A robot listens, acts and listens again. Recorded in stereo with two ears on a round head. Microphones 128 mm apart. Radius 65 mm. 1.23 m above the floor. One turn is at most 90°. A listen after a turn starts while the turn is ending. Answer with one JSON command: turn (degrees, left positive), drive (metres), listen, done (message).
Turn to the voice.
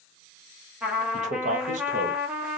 {"turn": -55}
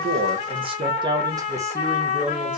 {"turn": -10}
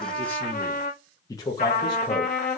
{"turn": 30}
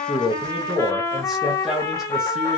{"done": "Found it: a man speaking, straight ahead."}